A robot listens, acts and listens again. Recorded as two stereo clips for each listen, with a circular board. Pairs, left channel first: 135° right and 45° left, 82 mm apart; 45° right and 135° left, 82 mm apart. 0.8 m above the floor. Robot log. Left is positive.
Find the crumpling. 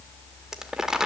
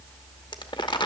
note: The crumpling: 35° right.
cmd yaw -35
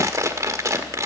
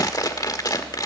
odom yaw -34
end: Facing the crumpling, under 1 m away.